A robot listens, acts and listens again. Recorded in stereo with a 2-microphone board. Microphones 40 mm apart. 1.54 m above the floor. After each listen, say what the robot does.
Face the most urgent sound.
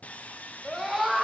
Turn 30° right.
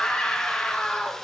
Turn 25° left.
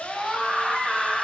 Found it: a scream, straight ahead, 2 to 4 m away.